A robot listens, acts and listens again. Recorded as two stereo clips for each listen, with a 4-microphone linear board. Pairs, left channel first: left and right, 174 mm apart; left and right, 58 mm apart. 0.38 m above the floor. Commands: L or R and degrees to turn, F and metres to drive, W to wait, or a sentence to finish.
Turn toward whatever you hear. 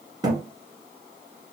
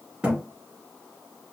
R25
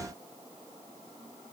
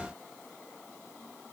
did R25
W
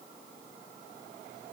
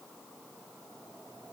I heard a thud, but can't make it out now. It was about straight ahead or 130° right.